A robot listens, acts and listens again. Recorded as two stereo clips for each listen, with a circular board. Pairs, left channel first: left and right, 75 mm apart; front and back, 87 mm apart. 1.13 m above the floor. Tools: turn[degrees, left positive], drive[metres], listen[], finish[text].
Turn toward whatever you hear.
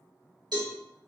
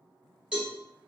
Thought: The cowbell: 100° right.
Action: turn[-100]
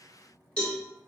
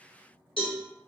Thought: The cowbell is now 15° left.
Action: turn[15]
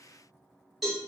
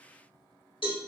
Action: finish[Found it: a cowbell, straight ahead.]